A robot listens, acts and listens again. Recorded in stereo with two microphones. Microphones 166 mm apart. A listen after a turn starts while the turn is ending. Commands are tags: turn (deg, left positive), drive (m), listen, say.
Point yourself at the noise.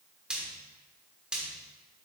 <turn deg="-30"/>
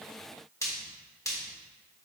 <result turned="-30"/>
<turn deg="20"/>
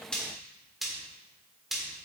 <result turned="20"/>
<say>Facing the frying, 1 to 2 m away.</say>